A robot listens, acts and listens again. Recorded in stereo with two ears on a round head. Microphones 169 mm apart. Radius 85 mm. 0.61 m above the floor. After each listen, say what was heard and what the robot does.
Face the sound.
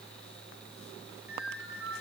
Turn 30° right.
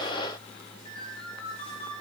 So it is at 25° left. Turn 25° left.
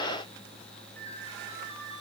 The ringtone is now 10° left. Turn 10° left.
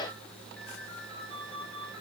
Facing the ringtone, over 4 m away.